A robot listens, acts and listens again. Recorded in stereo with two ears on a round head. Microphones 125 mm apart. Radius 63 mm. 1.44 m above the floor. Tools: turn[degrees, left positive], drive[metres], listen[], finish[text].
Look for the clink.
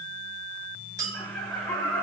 Thought: The clink: about 25° right or 155° right.
Action: turn[-25]
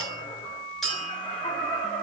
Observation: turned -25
Action: finish[Found it: a clink, straight ahead, over 4 m away.]